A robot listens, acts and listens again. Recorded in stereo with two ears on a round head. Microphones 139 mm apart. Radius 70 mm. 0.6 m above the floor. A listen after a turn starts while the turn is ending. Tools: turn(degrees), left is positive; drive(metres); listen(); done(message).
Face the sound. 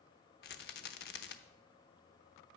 turn(degrees=70)
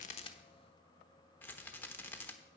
turn(degrees=15)
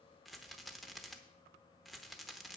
done("Facing the rattle, under 1 m away.")